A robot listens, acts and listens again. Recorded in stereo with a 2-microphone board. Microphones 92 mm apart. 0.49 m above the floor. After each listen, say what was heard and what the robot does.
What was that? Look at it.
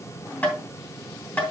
The tapping: about 20° left or 160° left. Turn 20° left.
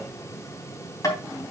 So it is at 140° left. Turn 140° left.
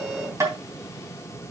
The tapping is now 40° right. Turn 40° right.
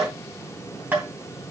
The tapping is now 25° right. Turn 25° right.
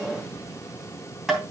The tapping is now 10° right. Turn 10° right.
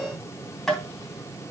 Facing the tapping.